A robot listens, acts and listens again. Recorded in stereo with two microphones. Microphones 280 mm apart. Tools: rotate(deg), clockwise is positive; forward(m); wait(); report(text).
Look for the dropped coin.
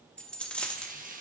rotate(-30)
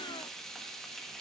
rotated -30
wait()
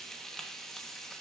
report("I heard a dropped coin, but can't make it out now. It was about 25° right or 145° left.")